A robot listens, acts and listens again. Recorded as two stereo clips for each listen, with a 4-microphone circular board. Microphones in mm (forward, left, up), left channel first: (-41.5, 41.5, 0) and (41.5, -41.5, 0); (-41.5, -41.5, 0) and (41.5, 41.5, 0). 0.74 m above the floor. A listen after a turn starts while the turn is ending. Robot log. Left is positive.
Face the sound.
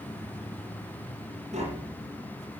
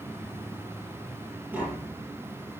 note: The tapping: 30° right.
cmd yaw -30
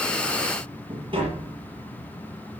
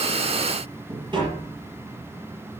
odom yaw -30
end: Facing the tapping, over 4 m away.